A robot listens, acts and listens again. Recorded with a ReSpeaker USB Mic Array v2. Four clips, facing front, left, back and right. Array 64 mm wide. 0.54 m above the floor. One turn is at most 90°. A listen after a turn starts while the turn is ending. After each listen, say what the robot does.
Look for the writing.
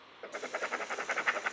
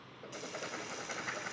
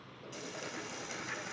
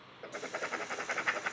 Turn 25° right.
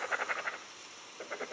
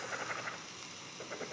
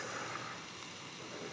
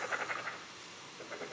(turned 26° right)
Facing the writing, 1 to 2 m away.